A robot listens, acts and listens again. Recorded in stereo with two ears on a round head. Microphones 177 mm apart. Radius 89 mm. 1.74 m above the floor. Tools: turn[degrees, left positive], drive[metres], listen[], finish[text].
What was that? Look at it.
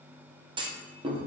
Thought: The clunk: about 25° right or 155° right.
Action: turn[-25]
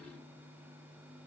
Action: listen[]
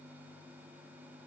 Action: finish[I heard a clunk, but can't make it out now. It was about straight ahead or 130° right.]